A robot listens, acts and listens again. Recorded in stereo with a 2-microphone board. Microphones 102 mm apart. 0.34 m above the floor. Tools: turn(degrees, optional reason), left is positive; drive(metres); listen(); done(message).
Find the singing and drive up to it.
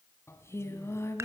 turn(degrees=25, reason="The singing: about 25° left or 155° left.")
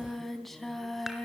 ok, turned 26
drive(metres=1.0)
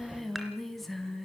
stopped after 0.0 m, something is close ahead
done("Blocked. The singing is further on, straight ahead.")